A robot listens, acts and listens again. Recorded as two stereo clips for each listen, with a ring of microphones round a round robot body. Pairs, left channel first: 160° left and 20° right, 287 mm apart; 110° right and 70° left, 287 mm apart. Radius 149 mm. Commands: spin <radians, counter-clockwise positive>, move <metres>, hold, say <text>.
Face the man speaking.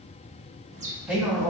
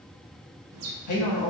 spin -1.92
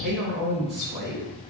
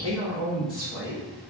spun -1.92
spin -0.70
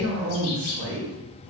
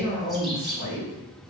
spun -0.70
spin -0.17
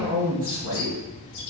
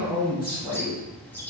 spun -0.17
say Found it: a man speaking, straight ahead.